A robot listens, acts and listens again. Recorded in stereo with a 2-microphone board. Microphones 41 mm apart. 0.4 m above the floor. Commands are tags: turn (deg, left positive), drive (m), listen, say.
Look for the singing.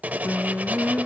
<turn deg="55"/>
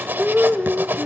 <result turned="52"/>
<turn deg="15"/>
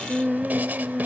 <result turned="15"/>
<say>Facing the singing, under 1 m away.</say>